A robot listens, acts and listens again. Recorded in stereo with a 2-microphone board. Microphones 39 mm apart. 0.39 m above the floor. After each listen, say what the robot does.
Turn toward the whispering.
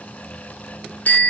Keep listening.
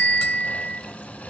Keep listening.
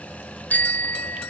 I can't make out whispering to turn to.